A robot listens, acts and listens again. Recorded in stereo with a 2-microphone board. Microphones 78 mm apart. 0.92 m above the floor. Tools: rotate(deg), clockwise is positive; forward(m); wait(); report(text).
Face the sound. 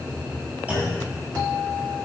rotate(15)
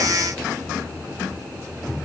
wait()
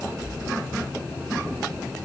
report("I heard a clunk, but can't make it out now. It was about straight ahead or 150° right.")